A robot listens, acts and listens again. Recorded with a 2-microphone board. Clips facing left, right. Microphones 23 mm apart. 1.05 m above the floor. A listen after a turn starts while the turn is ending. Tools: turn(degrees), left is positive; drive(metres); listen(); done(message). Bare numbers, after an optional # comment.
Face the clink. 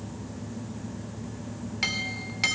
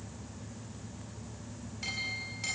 # The clink: about 70° left or 110° left.
turn(70)
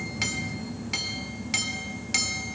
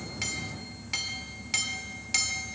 done("Found it: a clink, straight ahead, 1 to 2 m away.")